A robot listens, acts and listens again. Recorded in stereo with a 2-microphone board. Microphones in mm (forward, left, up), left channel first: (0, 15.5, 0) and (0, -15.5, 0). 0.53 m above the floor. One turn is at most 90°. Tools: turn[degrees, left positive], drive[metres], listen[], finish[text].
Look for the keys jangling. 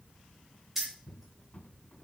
Action: turn[-30]
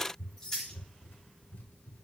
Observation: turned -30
Thought: So it is at 15° left.
Action: turn[15]
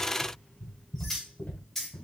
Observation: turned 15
Action: finish[Found it: keys jangling, straight ahead, 2 to 4 m away.]